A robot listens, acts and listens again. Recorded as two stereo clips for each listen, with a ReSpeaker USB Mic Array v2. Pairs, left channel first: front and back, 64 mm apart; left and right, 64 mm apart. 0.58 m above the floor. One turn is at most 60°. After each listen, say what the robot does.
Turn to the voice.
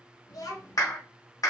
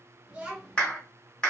Turn 20° right.
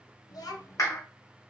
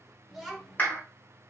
Facing the child speaking.